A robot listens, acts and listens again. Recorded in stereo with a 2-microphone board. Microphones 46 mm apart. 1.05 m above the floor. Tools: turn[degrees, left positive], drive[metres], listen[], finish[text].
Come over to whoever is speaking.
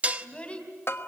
Thought: The child speaking: about 30° left or 150° left.
Action: turn[30]
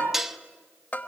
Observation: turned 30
Action: listen[]
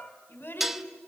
Thought: So it is at 125° left.
Action: turn[125]
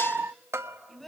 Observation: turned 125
Action: drive[1.0]
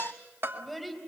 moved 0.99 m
Action: drive[1.0]
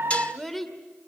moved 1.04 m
Action: drive[1.0]
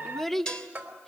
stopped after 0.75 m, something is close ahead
Action: finish[Arrived at the child speaking, straight ahead.]